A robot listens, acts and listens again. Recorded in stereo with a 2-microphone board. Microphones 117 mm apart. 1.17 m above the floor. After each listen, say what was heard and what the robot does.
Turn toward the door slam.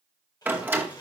The door slam: about 15° right or 165° right. Turn 15° right.
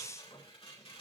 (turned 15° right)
Keep listening.
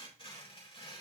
I heard a door slam, but can't make it out now. It was about straight ahead or 150° right.